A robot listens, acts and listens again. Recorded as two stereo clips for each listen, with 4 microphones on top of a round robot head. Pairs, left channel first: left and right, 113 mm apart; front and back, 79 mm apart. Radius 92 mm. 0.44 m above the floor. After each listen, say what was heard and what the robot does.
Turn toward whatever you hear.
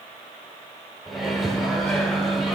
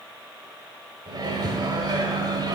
The microwave: straight behind. Turn 180° left.
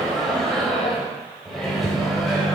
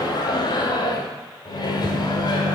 Facing the microwave.